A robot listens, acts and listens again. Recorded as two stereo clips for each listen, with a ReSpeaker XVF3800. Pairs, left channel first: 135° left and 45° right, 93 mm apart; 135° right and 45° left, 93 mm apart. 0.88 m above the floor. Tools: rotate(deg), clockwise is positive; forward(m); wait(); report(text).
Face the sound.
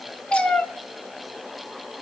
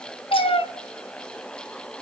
rotate(145)
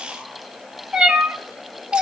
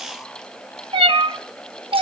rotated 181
rotate(-35)
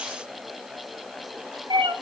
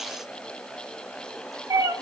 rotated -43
report("Found it: a cat meowing, straight ahead, under 1 m away.")